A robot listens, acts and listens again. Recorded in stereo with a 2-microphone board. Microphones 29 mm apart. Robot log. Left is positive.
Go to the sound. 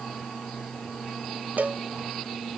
cmd yaw -90
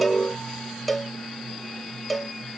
cmd fwd 1.0
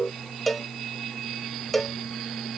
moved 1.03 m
cmd fwd 1.0
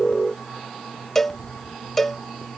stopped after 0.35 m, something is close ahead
note: The cowbell is now 15° left.
cmd yaw +15
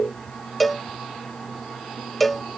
end: I am next to the cowbell.